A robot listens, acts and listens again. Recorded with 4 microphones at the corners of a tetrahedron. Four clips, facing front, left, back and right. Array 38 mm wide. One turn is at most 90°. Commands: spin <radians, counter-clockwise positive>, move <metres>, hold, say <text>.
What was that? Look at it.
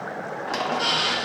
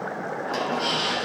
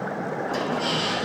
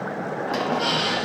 spin -0.35
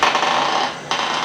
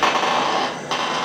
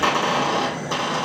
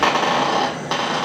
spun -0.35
say Found it: a squeak, straight ahead, 1 to 2 m away.